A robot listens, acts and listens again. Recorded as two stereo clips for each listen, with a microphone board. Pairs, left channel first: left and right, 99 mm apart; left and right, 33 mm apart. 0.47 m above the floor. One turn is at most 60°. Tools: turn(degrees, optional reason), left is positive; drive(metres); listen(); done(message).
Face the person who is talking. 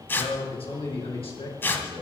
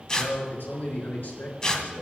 turn(degrees=60, reason="The man speaking: about 65° left or 115° left.")
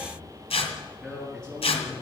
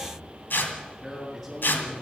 done("Found it: a man speaking, straight ahead.")